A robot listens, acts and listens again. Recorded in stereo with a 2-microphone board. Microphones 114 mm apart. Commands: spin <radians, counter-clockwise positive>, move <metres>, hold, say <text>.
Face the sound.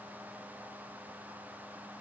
hold
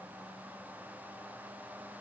hold
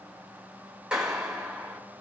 spin -0.52
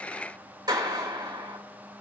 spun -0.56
spin -2.44
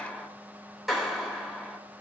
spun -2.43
say Facing the clap, over 4 m away.